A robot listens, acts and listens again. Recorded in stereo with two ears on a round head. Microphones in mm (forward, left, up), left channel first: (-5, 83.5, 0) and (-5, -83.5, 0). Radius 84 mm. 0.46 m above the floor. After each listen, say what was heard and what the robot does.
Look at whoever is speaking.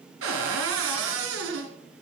Keep listening.
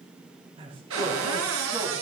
The man speaking: about 30° right or 150° right. Turn 30° right.
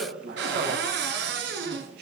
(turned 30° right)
So it is at 120° right. Turn 120° right.
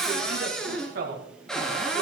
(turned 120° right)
The man speaking is now 55° right. Turn 55° right.
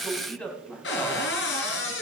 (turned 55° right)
The man speaking is now 10° left. Turn 10° left.
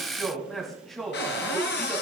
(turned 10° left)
Found it: a man speaking, straight ahead.